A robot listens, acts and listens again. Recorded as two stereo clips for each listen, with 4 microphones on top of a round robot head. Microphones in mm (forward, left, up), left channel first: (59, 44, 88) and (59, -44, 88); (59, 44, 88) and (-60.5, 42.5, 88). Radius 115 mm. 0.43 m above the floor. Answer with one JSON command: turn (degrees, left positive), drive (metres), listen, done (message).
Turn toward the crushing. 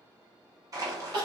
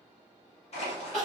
{"turn": -40}
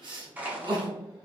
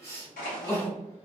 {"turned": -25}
{"turn": -15}
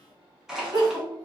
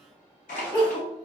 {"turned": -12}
{"done": "Facing the crushing, 1 to 2 m away."}